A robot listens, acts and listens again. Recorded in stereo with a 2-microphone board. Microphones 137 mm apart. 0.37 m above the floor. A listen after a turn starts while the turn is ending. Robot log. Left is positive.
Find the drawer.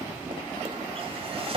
note: The drawer: about 40° right or 140° right.
cmd yaw -40
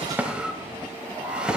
end: Facing the drawer.